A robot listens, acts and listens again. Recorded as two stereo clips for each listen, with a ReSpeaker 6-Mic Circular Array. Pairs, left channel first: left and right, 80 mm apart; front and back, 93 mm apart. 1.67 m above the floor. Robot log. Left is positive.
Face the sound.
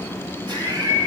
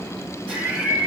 note: The laughter: 110° right.
cmd yaw -110
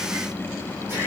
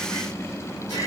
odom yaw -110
note: The laughter is now 35° right.
cmd yaw -35
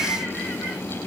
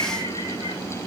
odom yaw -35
end: Facing the laughter, 2 to 4 m away.